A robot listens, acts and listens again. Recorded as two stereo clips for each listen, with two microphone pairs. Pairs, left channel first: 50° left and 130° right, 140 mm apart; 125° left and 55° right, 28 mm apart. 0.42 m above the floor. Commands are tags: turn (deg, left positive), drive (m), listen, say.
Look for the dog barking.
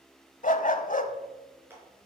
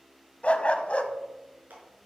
<turn deg="80"/>
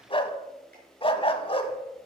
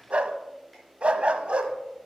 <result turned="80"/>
<say>Found it: a dog barking, straight ahead.</say>